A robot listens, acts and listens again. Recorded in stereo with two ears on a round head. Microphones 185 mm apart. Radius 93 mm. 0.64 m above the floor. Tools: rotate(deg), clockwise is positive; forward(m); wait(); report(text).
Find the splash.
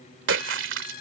rotate(60)
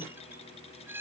wait()
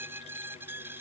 report("I heard a splash, but can't make it out now. It was about straight ahead or 60° right.")